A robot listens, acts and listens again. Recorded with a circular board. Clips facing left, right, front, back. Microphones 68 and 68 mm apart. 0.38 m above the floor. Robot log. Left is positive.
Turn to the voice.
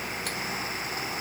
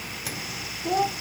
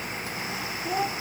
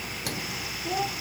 note: The child speaking: 85° right.
cmd yaw -85
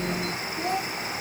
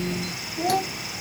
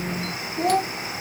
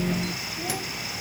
note: The child speaking is now 15° right.
cmd yaw -15
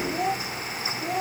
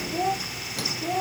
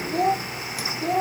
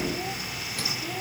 end: Found it: a child speaking, straight ahead.